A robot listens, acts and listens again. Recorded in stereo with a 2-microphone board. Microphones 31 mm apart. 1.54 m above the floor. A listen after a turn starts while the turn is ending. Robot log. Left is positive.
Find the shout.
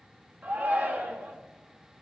note: The shout: about 70° right or 110° right.
cmd yaw -70
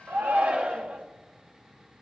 note: So it is at 40° right.
cmd yaw -40
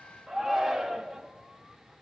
note: The shout is now 10° right.
cmd yaw -10
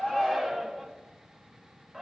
end: Facing the shout.